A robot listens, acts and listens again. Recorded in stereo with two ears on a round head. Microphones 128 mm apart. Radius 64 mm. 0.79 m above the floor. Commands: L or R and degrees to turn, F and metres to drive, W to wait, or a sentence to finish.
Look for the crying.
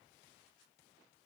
W
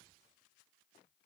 W
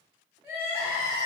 R30
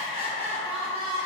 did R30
R135
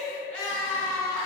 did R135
L10
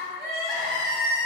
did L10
Found it: crying, straight ahead, under 1 m away.